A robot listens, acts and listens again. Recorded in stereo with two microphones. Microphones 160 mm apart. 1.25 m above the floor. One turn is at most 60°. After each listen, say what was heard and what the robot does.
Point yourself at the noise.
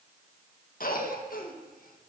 The cough: about 60° left or 120° left. Turn 60° left.
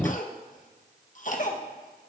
So it is at 55° left. Turn 55° left.
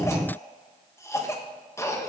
The cough is now 20° left. Turn 20° left.
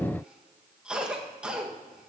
Found it: a cough, straight ahead, 1 to 2 m away.